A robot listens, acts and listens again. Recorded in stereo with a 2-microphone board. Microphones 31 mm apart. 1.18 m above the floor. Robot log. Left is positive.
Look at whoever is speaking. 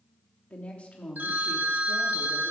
note: The woman speaking: about 45° left or 135° left.
cmd yaw +45
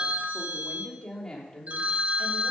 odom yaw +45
note: So it is at 25° left.
cmd yaw +25
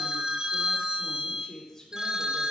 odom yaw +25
note: The woman speaking is now 10° left.
cmd yaw +10
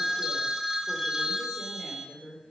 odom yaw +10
end: Found it: a woman speaking, straight ahead.